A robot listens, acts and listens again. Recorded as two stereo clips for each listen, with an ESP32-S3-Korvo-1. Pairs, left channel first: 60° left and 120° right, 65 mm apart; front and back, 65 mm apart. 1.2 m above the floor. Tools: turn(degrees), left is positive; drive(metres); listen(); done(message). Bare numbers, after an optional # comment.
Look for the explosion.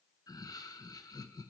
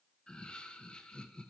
listen()
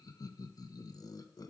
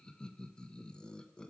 listen()
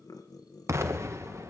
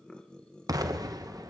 # The explosion: 165° right.
turn(-165)
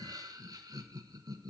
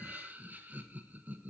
done("I heard an explosion from this way, but can't make it out now.")